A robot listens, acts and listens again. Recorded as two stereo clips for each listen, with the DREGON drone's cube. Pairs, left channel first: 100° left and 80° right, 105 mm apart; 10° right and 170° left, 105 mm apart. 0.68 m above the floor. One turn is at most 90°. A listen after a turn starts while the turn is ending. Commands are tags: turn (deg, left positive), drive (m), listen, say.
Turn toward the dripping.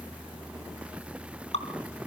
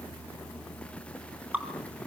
<turn deg="90"/>
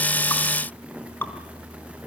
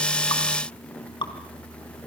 <turn deg="30"/>
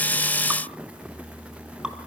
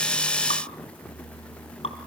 <listen/>
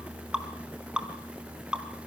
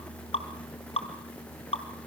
<say>Facing the dripping.</say>